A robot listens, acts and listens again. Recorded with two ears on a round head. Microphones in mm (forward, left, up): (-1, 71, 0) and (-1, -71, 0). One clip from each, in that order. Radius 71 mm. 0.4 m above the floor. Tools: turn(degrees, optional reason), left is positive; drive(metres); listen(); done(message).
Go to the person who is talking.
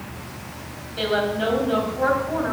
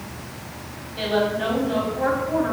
turn(degrees=20, reason="The woman speaking: about 20° left or 160° left.")
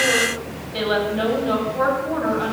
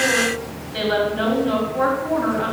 drive(metres=1.0)
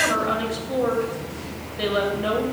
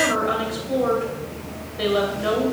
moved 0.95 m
drive(metres=1.0)
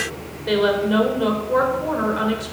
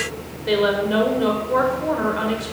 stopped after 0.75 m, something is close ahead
done("Arrived at the woman speaking, straight ahead.")